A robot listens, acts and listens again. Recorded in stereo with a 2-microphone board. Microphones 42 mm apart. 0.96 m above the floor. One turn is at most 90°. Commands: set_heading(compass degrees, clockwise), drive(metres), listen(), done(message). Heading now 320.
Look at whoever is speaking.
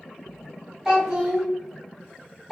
set_heading(350)
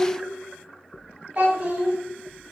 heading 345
set_heading(75)
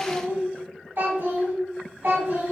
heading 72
set_heading(132)
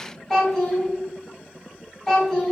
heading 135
done("Facing the child speaking, 1 to 2 m away.")